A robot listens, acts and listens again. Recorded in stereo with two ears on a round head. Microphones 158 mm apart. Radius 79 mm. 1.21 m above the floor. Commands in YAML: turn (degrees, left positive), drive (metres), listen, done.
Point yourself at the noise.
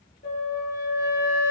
turn: 50
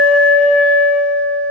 turn: 80
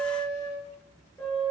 turn: 15
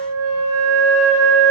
done: "Facing the flute."